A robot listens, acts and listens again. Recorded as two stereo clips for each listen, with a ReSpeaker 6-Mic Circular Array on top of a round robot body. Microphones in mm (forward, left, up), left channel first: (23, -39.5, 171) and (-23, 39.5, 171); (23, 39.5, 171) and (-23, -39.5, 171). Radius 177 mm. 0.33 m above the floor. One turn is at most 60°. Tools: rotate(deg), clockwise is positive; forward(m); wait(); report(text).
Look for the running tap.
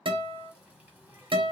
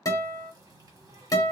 rotate(60)
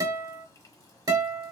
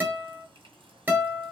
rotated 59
rotate(60)
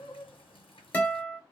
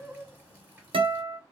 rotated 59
rotate(50)
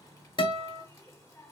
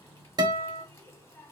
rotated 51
report("Found it: a running tap, straight ahead, 1 to 2 m away.")